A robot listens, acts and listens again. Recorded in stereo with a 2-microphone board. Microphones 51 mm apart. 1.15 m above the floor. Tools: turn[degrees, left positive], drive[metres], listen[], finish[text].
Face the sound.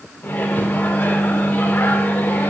Thought: The microwave: about 35° left or 145° left.
Action: turn[35]
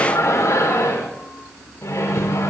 Thought: So it is at 110° left.
Action: turn[110]
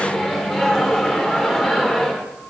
Thought: The microwave is now 10° left.
Action: turn[10]
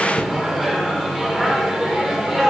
Action: finish[Found it: a microwave, straight ahead.]